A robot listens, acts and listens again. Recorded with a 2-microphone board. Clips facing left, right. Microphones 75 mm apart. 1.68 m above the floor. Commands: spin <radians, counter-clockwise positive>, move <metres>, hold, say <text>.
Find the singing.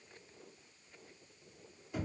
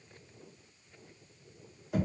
hold
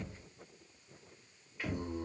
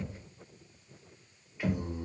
spin -0.52
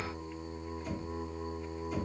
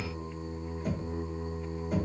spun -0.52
spin -2.44
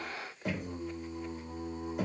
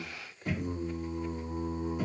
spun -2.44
say Facing the singing.